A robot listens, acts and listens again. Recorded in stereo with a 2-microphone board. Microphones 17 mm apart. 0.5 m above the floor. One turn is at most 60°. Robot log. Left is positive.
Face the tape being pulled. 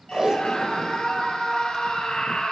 note: The tape being pulled: about 40° right or 140° right.
cmd yaw -40
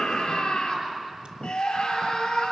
cmd idle
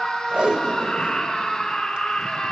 note: So it is at 90° right.
cmd yaw -60
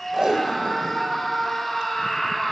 note: The tape being pulled is now 40° right.
cmd yaw -40
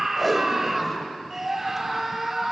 end: Facing the tape being pulled, 1 to 2 m away.